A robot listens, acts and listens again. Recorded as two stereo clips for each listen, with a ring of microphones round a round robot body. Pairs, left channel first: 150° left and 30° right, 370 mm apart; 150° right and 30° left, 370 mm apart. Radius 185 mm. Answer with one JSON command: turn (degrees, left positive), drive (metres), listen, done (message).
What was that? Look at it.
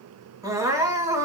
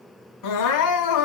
{"turn": -110}
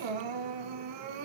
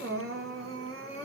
{"turn": -30}
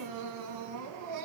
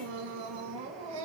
{"turn": 10}
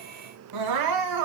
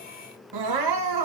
{"done": "Facing the crying, over 4 m away."}